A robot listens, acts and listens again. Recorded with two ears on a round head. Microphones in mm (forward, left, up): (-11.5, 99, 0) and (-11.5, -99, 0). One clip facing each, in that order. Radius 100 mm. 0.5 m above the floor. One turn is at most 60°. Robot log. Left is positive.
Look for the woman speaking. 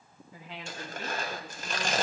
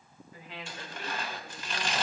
note: The woman speaking: about 65° left or 115° left.
cmd yaw +60
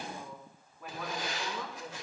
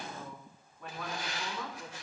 end: Facing the woman speaking.